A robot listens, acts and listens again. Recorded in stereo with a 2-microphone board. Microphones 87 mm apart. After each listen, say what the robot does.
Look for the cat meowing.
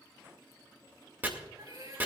Turn 50° right.
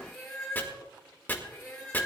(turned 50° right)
Turn 10° left.
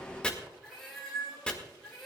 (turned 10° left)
Facing the cat meowing.